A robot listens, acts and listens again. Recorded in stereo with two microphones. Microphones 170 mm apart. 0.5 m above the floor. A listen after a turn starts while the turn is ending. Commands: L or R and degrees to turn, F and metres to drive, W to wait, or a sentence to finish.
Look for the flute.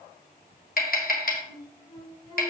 L30
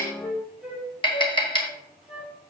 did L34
Facing the flute, 2 to 4 m away.